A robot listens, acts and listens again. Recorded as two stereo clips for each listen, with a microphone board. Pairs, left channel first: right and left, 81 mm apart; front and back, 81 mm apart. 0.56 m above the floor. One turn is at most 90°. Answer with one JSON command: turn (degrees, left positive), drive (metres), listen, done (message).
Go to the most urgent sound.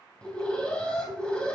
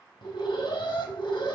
{"turn": -10}
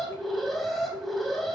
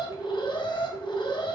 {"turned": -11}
{"drive": 1.0}
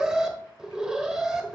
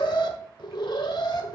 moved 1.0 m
{"turn": 10}
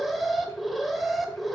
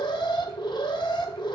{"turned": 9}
{"drive": 1.0}
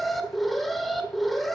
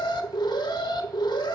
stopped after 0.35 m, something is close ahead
{"done": "Arrived at the alarm, straight ahead."}